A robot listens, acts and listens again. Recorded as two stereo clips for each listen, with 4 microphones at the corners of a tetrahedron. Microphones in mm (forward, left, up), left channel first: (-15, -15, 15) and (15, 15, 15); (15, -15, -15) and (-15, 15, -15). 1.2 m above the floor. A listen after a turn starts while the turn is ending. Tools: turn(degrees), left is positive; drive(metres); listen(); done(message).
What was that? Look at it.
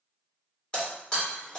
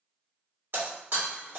turn(degrees=155)
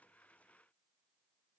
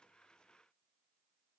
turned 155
done("I heard breaking glass from this way, but can't make it out now.")